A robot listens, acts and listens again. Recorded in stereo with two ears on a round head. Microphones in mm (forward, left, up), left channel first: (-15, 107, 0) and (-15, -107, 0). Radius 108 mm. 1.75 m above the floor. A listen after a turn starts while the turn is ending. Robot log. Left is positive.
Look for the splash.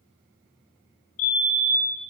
cmd idle
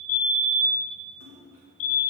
note: The splash: about 55° right or 125° right.
cmd yaw -55
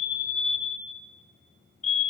cmd idle
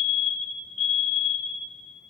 end: I heard a splash, but can't make it out now. It was about straight ahead or 70° right.